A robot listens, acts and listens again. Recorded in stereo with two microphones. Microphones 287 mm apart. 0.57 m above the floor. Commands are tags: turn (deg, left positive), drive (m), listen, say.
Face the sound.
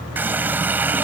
<turn deg="-30"/>
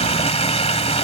<turn deg="20"/>
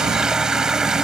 <say>Facing the running tap.</say>